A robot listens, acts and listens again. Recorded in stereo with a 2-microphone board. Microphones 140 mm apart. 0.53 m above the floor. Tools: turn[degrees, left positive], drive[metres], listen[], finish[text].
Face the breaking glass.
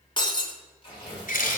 Thought: The breaking glass: about 35° left or 145° left.
Action: turn[35]
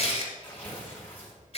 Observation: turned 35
Action: listen[]
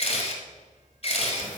Action: finish[I heard breaking glass, but can't make it out now. It was about straight ahead or 110° left.]